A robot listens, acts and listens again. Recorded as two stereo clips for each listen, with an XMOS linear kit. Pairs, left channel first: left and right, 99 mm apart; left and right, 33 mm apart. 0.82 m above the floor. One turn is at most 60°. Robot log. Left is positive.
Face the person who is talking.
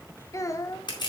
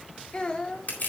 note: The child speaking: about 30° left or 150° left.
cmd yaw +30
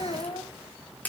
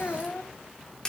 note: So it is at 120° left.
cmd yaw +60
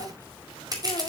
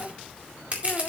note: Nothing new. It was at 60° left.
cmd yaw +60
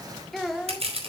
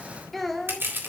end: Facing the child speaking, 1 to 2 m away.